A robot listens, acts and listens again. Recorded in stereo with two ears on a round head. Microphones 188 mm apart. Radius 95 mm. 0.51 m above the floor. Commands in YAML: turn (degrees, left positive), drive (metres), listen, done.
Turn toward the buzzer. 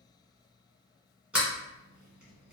listen: true
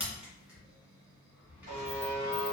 turn: -40
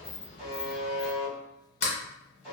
done: "Facing the buzzer, 1 to 2 m away."